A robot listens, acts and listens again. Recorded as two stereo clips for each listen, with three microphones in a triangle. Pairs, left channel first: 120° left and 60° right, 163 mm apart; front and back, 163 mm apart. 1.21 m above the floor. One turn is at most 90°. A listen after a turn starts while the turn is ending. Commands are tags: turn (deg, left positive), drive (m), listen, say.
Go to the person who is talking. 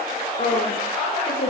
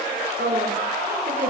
<turn deg="90"/>
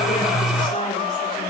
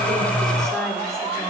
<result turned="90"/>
<turn deg="80"/>
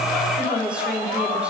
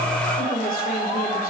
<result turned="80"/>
<turn deg="25"/>
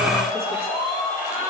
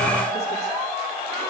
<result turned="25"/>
<listen/>
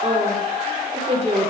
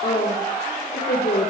<turn deg="-10"/>
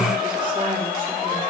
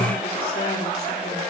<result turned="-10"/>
<listen/>
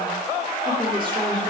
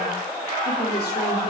<listen/>
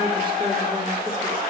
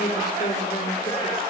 <say>Facing where the woman speaking came from. I can't hear it now. I did not reach it.</say>